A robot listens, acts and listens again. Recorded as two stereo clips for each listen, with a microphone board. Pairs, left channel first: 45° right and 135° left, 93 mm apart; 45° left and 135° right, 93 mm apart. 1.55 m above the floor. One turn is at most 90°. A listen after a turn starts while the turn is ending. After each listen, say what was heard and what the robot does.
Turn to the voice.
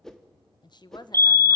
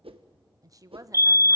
The woman speaking: 85° right. Turn 85° right.
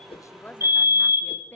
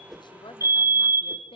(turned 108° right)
The woman speaking is now 25° left. Turn 25° left.
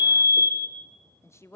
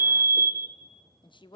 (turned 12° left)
The woman speaking is now 15° left. Turn 15° left.
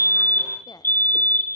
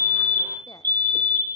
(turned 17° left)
Keep listening.
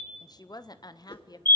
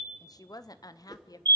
Found it: a woman speaking, straight ahead.